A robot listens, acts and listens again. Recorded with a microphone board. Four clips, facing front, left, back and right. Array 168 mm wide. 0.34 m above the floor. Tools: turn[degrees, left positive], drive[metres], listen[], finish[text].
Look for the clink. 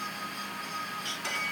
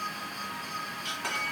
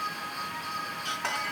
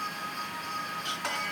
Thought: The clink: 175° right.
Action: turn[-175]
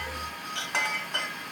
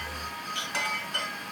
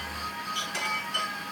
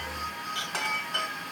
Thought: The clink is now 15° right.
Action: turn[-15]
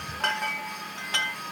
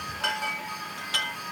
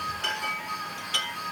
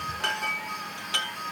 Action: finish[Found it: a clink, straight ahead, 1 to 2 m away.]